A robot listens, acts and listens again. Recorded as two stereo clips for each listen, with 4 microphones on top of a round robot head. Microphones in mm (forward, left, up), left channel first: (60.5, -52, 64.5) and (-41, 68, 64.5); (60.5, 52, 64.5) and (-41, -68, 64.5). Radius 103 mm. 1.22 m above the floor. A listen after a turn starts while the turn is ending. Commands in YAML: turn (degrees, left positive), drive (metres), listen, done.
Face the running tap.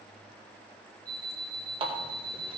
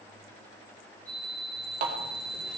turn: -170
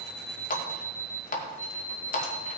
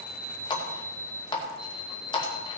turn: -15
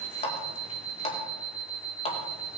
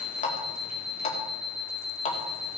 done: "Found it: a running tap, straight ahead, 2 to 4 m away."